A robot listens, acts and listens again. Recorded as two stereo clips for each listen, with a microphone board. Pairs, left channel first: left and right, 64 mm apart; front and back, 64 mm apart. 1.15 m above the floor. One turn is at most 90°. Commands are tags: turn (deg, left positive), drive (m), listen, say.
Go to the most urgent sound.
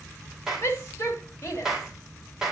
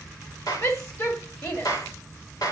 <turn deg="45"/>
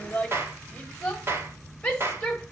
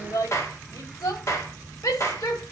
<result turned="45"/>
<turn deg="15"/>
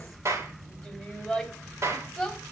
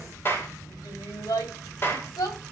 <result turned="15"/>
<drive m="1.0"/>
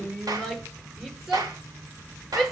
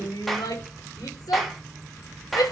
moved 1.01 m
<drive m="1.0"/>
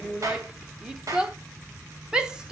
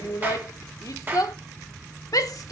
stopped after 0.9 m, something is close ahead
<turn deg="-15"/>
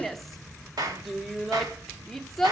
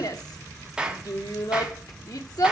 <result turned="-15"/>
<say>I am next to the shout.</say>